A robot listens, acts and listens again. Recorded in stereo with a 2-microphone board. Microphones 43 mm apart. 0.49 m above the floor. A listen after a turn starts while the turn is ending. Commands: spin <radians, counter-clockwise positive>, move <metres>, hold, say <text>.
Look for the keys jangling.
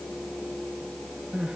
hold
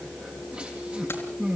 hold
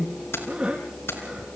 spin 1.57
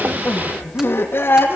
hold
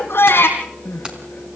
spin -0.35
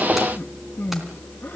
hold
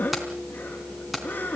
say Facing the keys jangling, 2 to 4 m away.